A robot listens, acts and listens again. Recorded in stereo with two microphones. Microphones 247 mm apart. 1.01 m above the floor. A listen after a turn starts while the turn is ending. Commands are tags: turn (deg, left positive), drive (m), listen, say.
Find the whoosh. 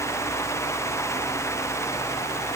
<listen/>
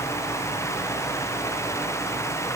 <listen/>
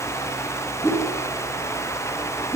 <turn deg="30"/>
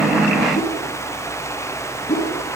<turn deg="140"/>
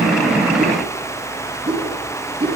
<turn deg="-20"/>
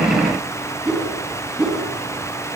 <say>Found it: a whoosh, straight ahead, over 4 m away.</say>